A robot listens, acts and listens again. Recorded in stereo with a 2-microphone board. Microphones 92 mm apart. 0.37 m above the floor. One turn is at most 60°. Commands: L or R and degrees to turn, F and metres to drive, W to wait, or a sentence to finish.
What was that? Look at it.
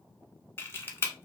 L25
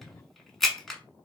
Facing the camera shutter.